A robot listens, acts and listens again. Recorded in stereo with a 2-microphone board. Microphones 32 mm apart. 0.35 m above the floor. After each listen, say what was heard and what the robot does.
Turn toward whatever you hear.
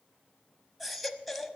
Turn 30° left.
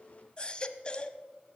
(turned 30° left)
So it is at 150° left. Turn 150° left.
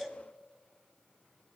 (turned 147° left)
Found it: a baby crying, straight ahead, under 1 m away.